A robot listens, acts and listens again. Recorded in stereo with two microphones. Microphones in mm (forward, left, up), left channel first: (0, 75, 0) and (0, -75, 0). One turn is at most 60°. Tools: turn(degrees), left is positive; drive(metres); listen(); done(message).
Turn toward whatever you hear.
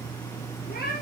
turn(degrees=60)
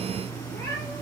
turn(degrees=20)
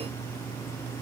listen()
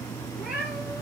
done("Found it: a cat meowing, straight ahead.")